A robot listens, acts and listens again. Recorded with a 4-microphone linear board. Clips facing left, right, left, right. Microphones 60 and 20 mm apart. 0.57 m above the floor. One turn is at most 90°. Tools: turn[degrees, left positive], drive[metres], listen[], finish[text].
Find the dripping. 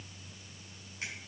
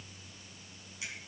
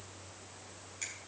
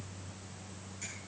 Action: listen[]
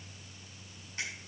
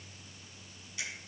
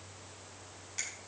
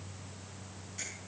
Action: listen[]
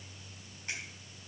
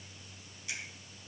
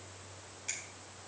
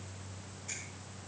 Action: finish[I can't make out dripping to turn to.]